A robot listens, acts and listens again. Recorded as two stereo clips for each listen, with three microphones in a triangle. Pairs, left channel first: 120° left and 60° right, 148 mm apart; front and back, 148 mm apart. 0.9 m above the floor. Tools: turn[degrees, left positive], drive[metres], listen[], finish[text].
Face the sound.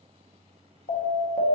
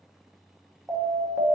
Thought: The alarm: 100° left.
Action: turn[100]
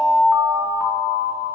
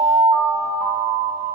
Thought: The alarm is now 35° left.
Action: turn[35]
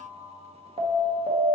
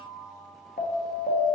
Thought: The alarm is now 15° right.
Action: turn[-15]
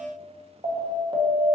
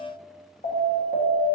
Action: finish[Found it: an alarm, straight ahead.]